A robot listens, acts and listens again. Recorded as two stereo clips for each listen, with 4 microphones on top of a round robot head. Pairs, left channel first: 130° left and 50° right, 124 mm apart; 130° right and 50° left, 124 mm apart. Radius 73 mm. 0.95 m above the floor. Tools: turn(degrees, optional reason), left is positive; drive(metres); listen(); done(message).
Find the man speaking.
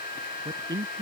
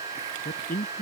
turn(degrees=-110, reason="The man speaking: 110° right.")
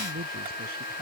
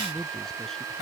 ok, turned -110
turn(degrees=-45, reason="The man speaking is now 45° right.")
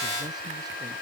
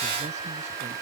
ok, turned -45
listen()
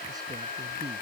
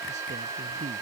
listen()
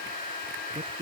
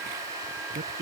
turn(degrees=15, reason="The man speaking is now 15° left.")
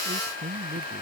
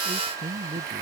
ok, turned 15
done("Found it: a man speaking, straight ahead.")